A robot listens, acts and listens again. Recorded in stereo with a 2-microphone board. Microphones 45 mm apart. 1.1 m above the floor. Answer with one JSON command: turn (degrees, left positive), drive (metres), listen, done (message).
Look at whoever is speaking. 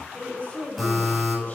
{"turn": 45}
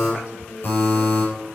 {"turn": 100}
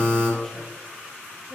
{"listen": true}
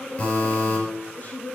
{"turn": 35}
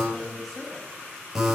{"done": "Facing the woman speaking."}